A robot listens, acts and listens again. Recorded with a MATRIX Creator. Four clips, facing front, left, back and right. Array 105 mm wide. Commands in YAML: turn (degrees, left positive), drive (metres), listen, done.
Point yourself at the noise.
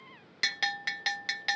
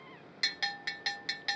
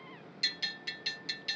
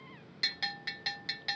turn: 10
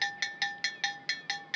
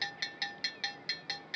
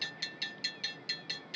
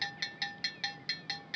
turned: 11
done: "Found it: a bell, straight ahead."